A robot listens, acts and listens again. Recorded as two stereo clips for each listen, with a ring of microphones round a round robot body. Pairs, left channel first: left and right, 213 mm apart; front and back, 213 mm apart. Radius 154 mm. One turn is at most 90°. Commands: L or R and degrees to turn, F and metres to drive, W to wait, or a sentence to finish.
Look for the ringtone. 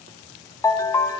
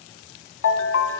L15
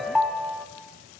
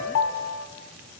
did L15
Facing the ringtone, 2 to 4 m away.